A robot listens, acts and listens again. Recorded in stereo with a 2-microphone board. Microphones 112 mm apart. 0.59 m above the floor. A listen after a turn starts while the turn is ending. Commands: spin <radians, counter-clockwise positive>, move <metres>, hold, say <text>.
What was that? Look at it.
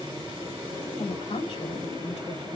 spin 1.22
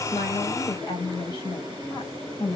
spin 0.79
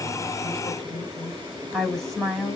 say Found it: a woman speaking, straight ahead, over 4 m away.